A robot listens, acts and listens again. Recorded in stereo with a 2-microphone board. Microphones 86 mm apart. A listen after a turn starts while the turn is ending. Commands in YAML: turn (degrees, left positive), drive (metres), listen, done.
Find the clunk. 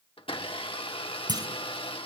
turn: -55
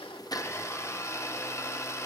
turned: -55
listen: true
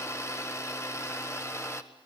done: "I heard a clunk, but can't make it out now. It was about straight ahead or 70° right."